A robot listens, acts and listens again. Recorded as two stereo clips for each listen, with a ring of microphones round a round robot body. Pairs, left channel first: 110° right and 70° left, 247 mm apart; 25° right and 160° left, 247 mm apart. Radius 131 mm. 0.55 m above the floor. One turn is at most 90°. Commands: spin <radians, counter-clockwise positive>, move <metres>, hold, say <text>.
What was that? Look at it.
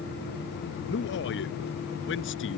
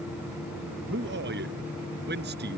spin -1.57
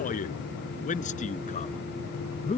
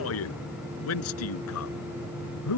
spin -0.87
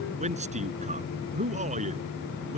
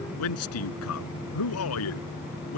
say Found it: a man speaking, straight ahead.